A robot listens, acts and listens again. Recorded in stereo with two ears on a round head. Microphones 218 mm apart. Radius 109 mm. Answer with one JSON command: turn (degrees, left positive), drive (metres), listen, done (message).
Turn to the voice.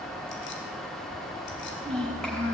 {"turn": 30}
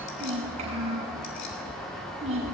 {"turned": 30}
{"turn": -25}
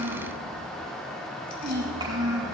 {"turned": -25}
{"turn": -20}
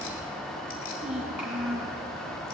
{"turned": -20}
{"done": "Facing the child speaking, over 4 m away."}